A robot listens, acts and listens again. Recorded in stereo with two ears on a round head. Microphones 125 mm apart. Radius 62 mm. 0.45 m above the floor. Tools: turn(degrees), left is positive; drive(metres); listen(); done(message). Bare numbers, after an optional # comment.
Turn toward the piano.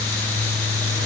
listen()
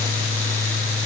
listen()
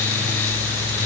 done("I can't make out a piano to turn to.")